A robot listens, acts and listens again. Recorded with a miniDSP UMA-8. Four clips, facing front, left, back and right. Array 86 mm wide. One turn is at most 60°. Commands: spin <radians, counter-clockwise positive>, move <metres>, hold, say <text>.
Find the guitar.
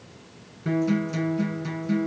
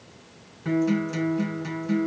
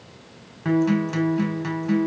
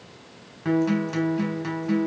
spin -1.05
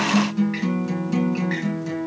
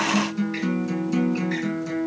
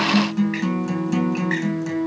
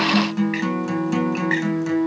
spin -1.05
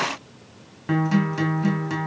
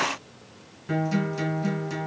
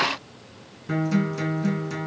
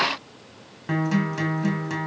spin -0.52
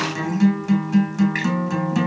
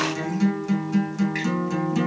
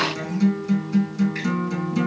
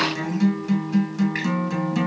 say Facing the guitar.